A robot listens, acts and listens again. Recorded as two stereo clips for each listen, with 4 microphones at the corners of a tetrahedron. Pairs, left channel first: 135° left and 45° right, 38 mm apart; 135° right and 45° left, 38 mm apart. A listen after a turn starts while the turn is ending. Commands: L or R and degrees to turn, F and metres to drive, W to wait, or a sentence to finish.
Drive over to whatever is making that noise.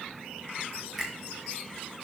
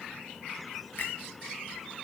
R135
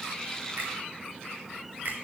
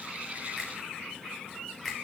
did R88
R45
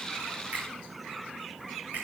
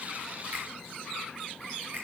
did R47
F1.0
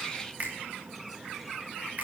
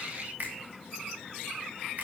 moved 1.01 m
F1.0
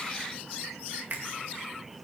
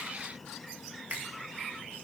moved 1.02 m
F1.0
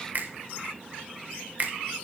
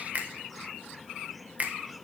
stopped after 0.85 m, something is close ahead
Arrived at the finger snap, straight ahead.